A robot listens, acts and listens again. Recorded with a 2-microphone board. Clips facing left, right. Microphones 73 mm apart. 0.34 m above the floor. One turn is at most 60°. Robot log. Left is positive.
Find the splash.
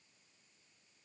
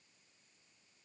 cmd idle
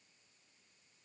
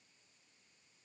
cmd idle
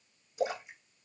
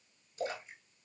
note: The splash: about 15° left or 165° left.
cmd yaw +15
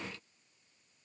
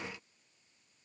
cmd idle
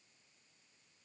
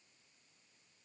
end: I heard a splash, but can't make it out now. It was about straight ahead or 150° left.